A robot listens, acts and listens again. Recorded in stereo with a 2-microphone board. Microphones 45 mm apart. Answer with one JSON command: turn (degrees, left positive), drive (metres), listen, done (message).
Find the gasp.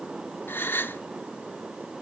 {"turn": 50}
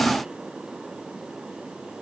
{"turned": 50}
{"listen": true}
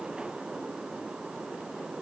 {"done": "I heard a gasp, but can't make it out now. It was about straight ahead or 80° left."}